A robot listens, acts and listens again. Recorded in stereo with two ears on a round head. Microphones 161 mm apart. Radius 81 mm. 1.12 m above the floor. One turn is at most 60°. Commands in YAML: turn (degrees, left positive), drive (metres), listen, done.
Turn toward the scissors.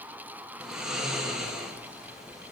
listen: true
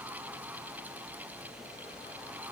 listen: true
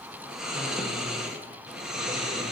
done: "I can't make out scissors to turn to."